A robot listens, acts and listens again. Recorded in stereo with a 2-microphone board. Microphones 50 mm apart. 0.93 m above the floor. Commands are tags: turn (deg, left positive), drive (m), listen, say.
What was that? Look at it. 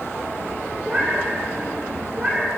<turn deg="-30"/>
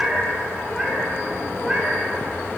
<turn deg="-10"/>
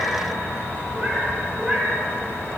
<turn deg="-10"/>
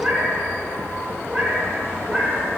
<say>Facing the cat meowing, over 4 m away.</say>